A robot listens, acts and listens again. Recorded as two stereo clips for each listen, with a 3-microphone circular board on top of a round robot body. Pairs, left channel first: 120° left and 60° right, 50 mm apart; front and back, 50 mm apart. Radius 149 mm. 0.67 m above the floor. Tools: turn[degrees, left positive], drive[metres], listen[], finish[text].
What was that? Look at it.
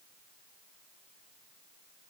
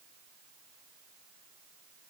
Action: listen[]
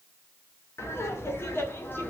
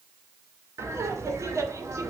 Thought: The laughter: 165° left.
Action: turn[165]
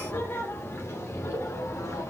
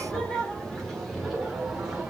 Thought: The laughter is now 95° left.
Action: turn[95]
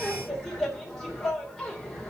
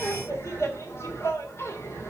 Thought: The laughter is now 35° left.
Action: turn[35]
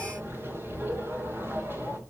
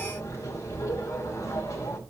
Thought: The laughter is now 15° right.
Action: turn[-15]
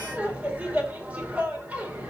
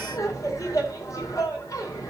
Action: finish[Facing the laughter, 2 to 4 m away.]